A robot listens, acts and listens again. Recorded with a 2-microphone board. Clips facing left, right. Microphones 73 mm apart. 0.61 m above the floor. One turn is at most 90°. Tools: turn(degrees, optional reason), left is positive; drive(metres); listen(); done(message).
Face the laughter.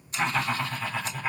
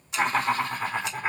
turn(degrees=-50, reason="The laughter: about 50° right or 130° right.")
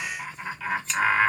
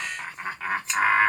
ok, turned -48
turn(degrees=-40, reason="So it is at 40° right.")
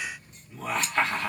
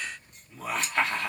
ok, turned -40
done("Facing the laughter, 1 to 2 m away.")